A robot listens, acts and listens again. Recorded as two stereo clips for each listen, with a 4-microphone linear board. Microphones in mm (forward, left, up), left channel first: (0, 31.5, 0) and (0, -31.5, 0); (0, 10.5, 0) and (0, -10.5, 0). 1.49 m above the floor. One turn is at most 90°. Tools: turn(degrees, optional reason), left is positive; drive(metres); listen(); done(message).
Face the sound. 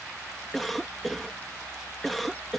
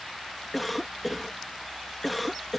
turn(degrees=30)
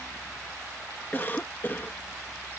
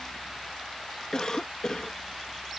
turn(degrees=90, reason="So it is at 150° left.")
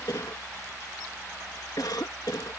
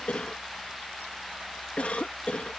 turn(degrees=85, reason="The cough is now 85° left.")
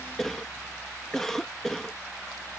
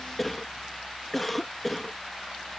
done("Facing the cough.")